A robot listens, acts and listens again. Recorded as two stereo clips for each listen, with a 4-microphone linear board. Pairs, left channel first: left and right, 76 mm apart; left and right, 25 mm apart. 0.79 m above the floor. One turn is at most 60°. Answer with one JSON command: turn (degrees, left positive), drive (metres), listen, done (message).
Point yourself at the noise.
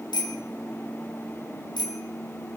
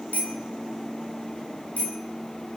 {"turn": 60}
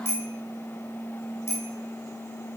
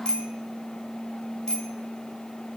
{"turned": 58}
{"turn": 35}
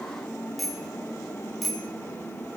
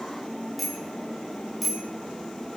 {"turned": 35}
{"done": "Facing the bicycle bell, 2 to 4 m away."}